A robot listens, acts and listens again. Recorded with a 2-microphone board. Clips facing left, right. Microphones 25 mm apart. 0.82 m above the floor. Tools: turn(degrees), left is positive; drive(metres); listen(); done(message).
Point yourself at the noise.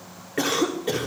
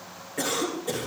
turn(degrees=40)
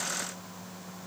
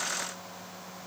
done("Facing the cough.")